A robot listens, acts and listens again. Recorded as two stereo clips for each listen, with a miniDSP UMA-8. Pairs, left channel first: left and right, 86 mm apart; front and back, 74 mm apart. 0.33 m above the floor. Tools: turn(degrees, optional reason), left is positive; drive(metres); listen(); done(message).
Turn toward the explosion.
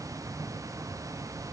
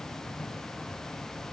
listen()
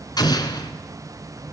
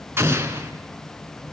turn(degrees=125, reason="The explosion: 125° left.")
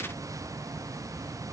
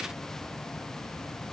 done("Facing where the explosion came from. I can't hear it now.")